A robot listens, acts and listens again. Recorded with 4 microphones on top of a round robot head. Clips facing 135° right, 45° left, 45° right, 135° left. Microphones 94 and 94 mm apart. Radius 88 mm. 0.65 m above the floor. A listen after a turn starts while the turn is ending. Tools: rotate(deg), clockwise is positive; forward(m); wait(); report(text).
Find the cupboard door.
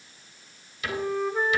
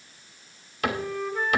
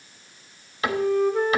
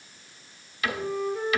rotate(-15)
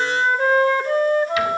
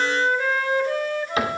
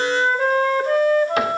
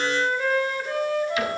wait()
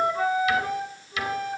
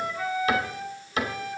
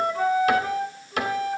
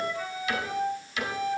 report("Found it: a cupboard door, straight ahead, 2 to 4 m away.")